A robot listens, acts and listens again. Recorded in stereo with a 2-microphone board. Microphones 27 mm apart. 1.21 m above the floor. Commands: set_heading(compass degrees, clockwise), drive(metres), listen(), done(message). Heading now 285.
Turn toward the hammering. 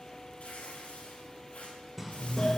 set_heading(315)
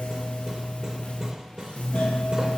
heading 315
set_heading(105)
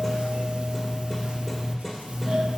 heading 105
set_heading(95)
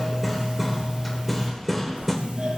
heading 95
done("Facing the hammering, 2 to 4 m away.")